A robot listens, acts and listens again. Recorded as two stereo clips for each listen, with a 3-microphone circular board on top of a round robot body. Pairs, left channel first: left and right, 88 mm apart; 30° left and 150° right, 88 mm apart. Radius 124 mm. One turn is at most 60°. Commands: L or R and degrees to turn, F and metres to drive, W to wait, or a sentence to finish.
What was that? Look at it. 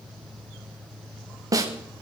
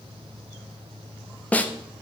R40
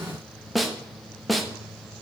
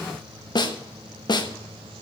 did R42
Facing the snare drum.